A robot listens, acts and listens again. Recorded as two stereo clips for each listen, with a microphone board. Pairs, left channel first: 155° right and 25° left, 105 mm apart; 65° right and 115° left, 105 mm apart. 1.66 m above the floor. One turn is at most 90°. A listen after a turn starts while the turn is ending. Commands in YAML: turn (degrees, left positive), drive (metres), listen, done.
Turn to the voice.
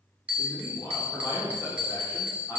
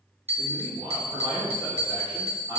turn: 90
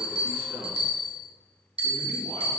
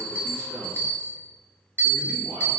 turn: 65
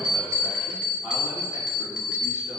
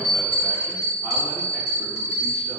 listen: true
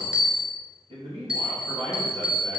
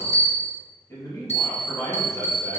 done: "Facing the man speaking, 2 to 4 m away."